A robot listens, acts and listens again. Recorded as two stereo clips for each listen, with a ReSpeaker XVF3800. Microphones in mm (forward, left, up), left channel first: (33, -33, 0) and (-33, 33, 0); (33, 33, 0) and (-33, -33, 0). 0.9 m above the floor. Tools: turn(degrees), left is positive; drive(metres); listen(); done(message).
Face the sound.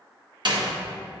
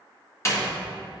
turn(degrees=105)
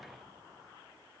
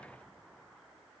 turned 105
done("Facing where the door slam came from. I can't hear it now.")